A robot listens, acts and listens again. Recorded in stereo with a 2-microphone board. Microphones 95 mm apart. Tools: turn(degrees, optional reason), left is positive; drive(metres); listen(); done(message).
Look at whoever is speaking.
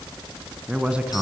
turn(degrees=-30)
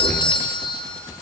listen()
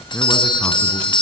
listen()
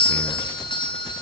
done("I heard a man speaking, but can't make it out now. It was about 20° left or 140° right.")